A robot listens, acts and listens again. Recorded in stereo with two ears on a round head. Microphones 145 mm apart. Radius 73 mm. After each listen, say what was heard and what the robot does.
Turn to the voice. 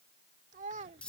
The child speaking: about 45° right or 135° right. Turn 45° right.
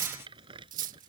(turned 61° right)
Keep listening.
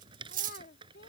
So it is at 65° left. Turn 65° left.
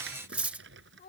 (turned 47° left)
The child speaking is now 55° left. Turn 55° left.
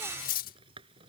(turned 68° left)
Nothing new. It was at 10° right. Turn 10° right.
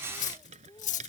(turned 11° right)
The child speaking is now 20° left. Turn 20° left.
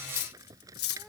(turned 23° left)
Keep listening.
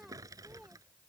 Keep listening.
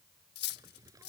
I heard a child speaking from this way, but can't make it out now.